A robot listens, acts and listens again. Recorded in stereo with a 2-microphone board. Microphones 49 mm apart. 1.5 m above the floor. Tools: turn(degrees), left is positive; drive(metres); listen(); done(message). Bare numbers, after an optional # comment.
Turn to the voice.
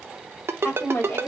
# The woman speaking: about 55° left or 125° left.
turn(55)
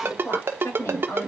# So it is at 80° left.
turn(80)
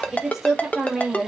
done("Found it: a woman speaking, straight ahead.")